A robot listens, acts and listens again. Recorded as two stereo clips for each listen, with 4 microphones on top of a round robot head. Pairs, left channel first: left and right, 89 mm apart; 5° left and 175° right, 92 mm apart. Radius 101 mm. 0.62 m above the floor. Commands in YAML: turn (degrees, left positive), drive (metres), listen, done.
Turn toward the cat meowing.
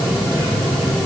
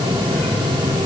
listen: true
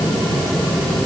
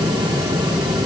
listen: true
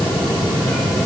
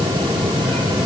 done: "I can't make out a cat meowing."